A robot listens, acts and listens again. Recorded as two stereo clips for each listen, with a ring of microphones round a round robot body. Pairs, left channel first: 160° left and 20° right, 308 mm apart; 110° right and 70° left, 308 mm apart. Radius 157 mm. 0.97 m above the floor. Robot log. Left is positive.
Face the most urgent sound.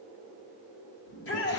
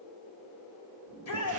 note: The shout: 150° right.
cmd yaw -150
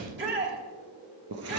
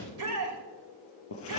note: The shout is now 35° left.
cmd yaw +35
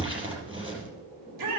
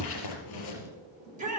end: Facing the shout.